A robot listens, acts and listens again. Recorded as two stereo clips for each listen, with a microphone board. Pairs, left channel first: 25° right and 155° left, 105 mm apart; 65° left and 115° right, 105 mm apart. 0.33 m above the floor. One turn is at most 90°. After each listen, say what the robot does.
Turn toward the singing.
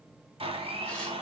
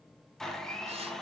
Keep listening.
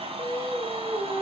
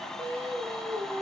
Turn 90° right.
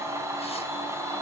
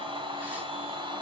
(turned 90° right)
Turn 60° right.
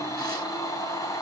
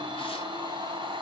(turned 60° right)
Keep listening.
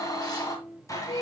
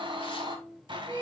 Found it: singing, straight ahead, 2 to 4 m away.